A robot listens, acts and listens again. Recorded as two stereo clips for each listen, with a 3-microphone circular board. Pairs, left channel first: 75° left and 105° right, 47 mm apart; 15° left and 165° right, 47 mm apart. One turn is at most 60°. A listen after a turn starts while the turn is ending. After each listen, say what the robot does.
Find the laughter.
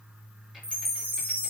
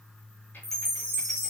Keep listening.
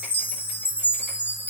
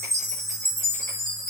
Keep listening.
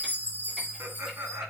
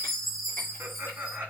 Turn 60° right.
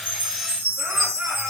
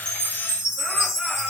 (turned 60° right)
Turn 60° right.
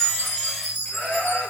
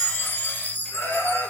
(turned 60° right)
Turn 10° left.
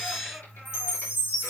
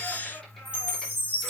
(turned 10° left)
Keep listening.
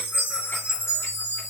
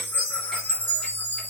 Keep listening.
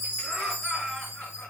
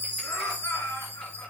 Found it: laughter, straight ahead, 2 to 4 m away.